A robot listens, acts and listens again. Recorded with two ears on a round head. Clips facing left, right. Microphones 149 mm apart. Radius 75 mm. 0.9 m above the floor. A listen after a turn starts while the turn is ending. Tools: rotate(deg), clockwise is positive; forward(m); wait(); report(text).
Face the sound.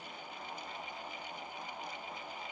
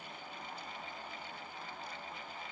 wait()
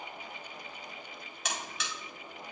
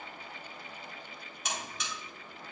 rotate(-55)
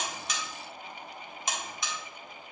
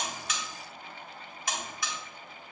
rotate(-25)
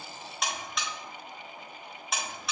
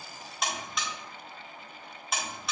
report("Found it: a buzzer, straight ahead.")